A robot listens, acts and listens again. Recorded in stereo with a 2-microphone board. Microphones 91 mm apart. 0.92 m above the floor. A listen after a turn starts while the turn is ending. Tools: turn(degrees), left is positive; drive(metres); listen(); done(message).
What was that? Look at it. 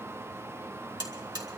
turn(degrees=-55)
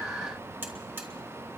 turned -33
turn(degrees=-25)
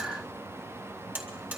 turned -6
turn(degrees=-20)
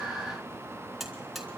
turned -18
done("Found it: a buzzer, straight ahead, 2 to 4 m away.")